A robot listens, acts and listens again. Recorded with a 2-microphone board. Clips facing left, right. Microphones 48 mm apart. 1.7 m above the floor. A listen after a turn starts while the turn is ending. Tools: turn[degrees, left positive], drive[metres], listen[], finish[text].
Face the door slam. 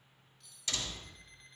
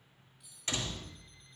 Thought: The door slam: about 30° right or 150° right.
Action: turn[-30]
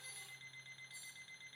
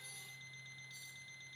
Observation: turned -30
Action: listen[]
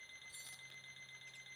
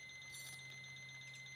Action: finish[I heard a door slam, but can't make it out now. It was about straight ahead or 120° right.]